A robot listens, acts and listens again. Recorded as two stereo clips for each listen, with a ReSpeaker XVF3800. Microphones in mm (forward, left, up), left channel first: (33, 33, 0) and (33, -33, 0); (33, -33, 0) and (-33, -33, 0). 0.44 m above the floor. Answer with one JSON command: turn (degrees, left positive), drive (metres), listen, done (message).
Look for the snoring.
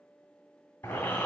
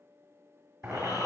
{"turn": 25}
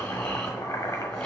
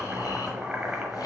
{"turn": 15}
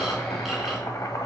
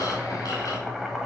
{"done": "Found it: snoring, straight ahead, 2 to 4 m away."}